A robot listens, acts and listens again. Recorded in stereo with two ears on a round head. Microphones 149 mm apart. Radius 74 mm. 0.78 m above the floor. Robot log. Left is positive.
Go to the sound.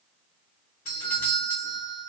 note: The doorbell: about 50° left or 130° left.
cmd yaw +50
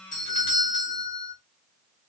note: So it is at 60° left.
cmd yaw +60
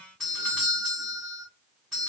cmd fwd 1.0
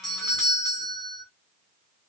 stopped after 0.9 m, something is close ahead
end: Arrived at the doorbell, straight ahead.